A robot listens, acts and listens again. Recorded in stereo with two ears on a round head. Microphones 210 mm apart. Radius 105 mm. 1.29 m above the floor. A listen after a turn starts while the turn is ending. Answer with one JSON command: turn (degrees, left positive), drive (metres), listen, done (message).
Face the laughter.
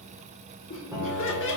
{"turn": 50}
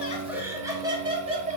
{"turn": -30}
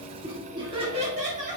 {"turn": -35}
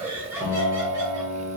{"turn": -10}
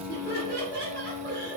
{"turn": -20}
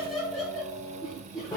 {"done": "Found it: laughter, straight ahead, 1 to 2 m away."}